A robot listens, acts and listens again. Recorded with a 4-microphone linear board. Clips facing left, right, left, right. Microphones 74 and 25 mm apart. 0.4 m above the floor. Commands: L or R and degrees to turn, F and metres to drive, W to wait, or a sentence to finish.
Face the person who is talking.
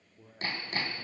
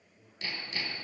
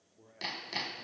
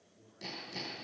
L90
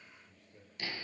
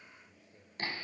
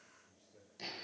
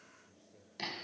Facing the man speaking, over 4 m away.